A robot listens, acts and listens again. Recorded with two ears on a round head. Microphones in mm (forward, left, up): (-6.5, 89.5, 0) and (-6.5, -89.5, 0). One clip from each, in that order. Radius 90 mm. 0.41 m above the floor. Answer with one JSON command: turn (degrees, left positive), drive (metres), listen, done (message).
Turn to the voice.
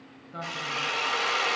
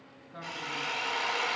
{"turn": 75}
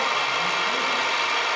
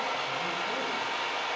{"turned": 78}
{"listen": true}
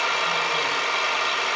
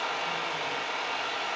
{"listen": true}
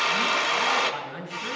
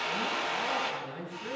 {"turn": 25}
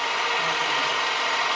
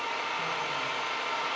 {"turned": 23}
{"listen": true}
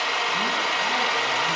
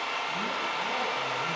{"listen": true}
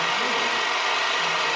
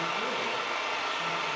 {"done": "I heard a man speaking from this way, but can't make it out now."}